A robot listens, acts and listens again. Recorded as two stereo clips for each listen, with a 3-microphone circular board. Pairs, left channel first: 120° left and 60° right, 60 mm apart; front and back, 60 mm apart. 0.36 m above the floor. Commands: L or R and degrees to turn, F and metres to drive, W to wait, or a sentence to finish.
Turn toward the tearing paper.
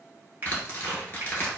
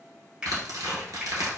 L180
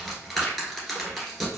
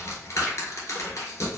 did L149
L30
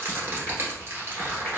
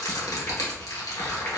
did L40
Found it: tearing paper, straight ahead.